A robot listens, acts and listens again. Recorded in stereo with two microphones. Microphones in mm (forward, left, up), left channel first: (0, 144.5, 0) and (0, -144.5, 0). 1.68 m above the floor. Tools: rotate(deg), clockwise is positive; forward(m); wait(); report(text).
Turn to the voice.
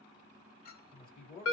rotate(-30)
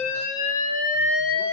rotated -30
wait()
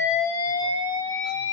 wait()
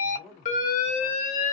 report("Facing the man speaking, 2 to 4 m away.")